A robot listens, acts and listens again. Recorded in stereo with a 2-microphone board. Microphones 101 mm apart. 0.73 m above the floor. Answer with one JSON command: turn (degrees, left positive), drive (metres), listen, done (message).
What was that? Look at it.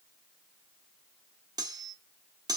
{"turn": -40}
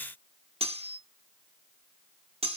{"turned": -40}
{"turn": -100}
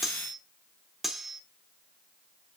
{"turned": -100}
{"done": "Found it: cutlery clinking, straight ahead."}